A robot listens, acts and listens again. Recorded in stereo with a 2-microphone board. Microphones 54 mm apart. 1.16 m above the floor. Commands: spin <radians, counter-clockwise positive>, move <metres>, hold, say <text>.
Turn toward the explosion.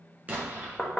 spin -0.52
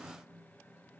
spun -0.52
hold
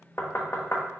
say I heard an explosion, but can't make it out now. It was about straight ahead or 120° right.